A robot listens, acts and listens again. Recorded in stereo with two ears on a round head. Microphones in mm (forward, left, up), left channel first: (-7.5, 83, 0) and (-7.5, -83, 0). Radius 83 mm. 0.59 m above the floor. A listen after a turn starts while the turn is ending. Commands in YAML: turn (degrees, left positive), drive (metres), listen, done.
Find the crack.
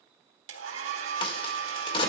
turn: 30
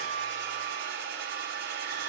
listen: true
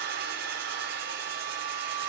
done: "I heard a crack, but can't make it out now. It was about straight ahead or 120° left."